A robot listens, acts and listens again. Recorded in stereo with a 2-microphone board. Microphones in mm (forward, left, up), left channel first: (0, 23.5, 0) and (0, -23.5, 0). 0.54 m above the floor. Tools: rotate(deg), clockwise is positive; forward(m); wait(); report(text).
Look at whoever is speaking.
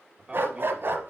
rotate(20)
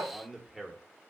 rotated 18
report("Found it: a man speaking, straight ahead, 1 to 2 m away.")